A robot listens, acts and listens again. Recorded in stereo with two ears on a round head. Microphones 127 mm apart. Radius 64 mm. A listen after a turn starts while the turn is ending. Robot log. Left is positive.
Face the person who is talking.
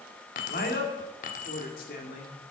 note: The man speaking: about 65° left or 115° left.
cmd yaw +65
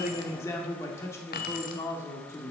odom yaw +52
note: So it is at 20° left.
cmd yaw +20
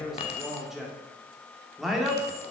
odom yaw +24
end: Found it: a man speaking, straight ahead.